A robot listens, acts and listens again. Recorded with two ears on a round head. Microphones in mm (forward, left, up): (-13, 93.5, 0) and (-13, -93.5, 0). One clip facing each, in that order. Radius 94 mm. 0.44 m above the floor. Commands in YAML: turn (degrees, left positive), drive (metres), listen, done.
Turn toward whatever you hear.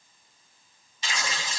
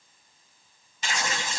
turn: -45
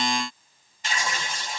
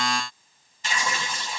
turn: -90
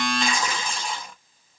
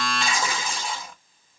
done: "Facing the tearing paper, 1 to 2 m away."